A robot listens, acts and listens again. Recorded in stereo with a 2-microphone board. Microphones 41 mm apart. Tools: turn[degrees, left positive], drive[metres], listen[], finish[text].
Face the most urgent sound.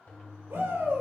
Thought: The shout: about 65° right or 115° right.
Action: turn[-65]
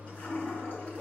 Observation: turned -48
Thought: So it is at 25° right.
Action: turn[-25]
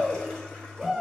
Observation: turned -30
Action: finish[Found it: a shout, straight ahead.]